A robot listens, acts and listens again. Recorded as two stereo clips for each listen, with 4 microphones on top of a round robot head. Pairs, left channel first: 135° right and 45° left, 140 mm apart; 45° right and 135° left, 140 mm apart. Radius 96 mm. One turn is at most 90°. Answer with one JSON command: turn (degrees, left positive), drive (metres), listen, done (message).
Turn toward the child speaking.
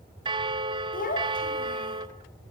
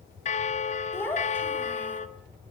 {"turn": -90}
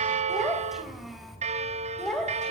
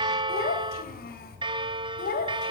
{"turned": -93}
{"turn": -50}
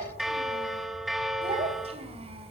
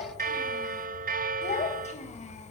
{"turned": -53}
{"done": "Facing the child speaking."}